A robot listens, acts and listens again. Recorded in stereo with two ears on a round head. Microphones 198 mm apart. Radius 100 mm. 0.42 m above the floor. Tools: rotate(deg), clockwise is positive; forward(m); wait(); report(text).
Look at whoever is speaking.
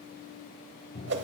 wait()
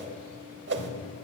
wait()
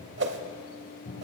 report("I can't make out anyone speaking to turn to.")